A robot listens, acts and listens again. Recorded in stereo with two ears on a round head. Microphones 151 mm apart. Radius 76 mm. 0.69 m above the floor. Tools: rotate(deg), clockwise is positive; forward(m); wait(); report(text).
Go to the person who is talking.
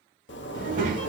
rotate(55)
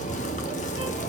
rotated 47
wait()
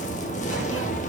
wait()
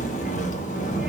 report("I heard a child speaking, but can't make it out now. It was about 5° right or 80° right. I did not reach it.")